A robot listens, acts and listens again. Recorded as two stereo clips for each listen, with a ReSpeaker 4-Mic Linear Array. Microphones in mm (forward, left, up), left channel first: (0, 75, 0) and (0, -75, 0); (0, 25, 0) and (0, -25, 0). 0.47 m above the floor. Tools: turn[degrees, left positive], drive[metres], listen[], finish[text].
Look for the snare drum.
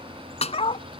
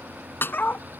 Thought: The snare drum: about 50° left or 130° left.
Action: turn[50]
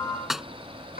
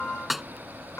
Action: finish[Found it: a snare drum, straight ahead.]